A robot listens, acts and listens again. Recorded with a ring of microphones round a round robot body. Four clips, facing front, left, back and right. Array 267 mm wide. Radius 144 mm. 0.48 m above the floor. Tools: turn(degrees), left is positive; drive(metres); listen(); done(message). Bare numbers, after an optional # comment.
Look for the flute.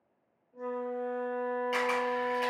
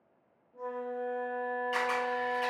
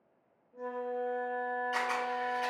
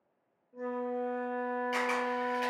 # The flute: 95° right.
turn(-95)
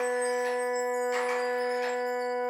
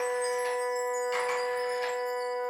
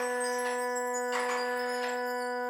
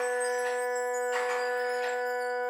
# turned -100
done("Facing the flute.")